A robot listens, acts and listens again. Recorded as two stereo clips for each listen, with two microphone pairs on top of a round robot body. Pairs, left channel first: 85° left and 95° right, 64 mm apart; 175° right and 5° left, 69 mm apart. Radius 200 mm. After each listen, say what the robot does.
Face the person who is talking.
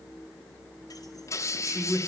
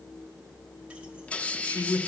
Turn 150° right.
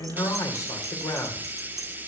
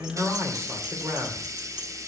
Turn 60° left.
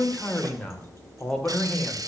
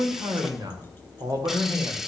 Turn 10° left.
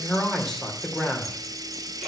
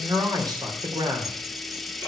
Found it: a man speaking, straight ahead.